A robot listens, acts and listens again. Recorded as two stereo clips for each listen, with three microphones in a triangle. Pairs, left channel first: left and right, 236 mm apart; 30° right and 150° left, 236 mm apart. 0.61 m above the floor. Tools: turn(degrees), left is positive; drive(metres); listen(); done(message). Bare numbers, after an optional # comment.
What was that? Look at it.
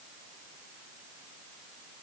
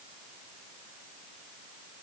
listen()
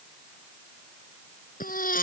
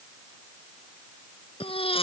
# The baby crying: 35° left.
turn(35)
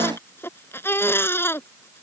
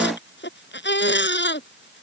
# The baby crying is now 10° left.
turn(10)
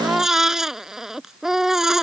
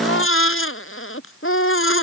done("Facing the baby crying.")